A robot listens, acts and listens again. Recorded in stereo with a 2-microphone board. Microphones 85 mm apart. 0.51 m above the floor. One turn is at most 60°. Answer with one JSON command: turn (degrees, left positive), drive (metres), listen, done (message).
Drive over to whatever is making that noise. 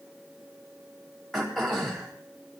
{"turn": 30}
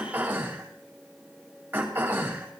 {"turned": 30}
{"turn": -20}
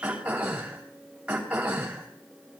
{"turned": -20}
{"turn": -15}
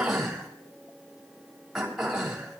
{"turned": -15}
{"drive": 1.0}
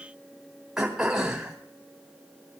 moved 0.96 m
{"drive": 1.0}
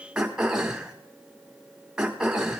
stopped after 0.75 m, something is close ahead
{"turn": -15}
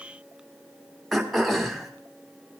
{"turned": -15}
{"done": "I am next to the throat clearing."}